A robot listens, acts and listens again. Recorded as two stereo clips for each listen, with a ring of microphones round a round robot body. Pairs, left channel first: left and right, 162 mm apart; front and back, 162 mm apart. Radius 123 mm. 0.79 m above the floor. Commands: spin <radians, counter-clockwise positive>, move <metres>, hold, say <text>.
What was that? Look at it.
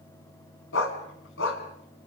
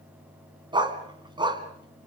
spin 2.01
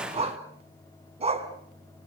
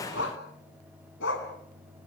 spin -0.61
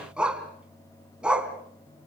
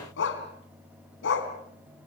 say Found it: a dog barking, straight ahead.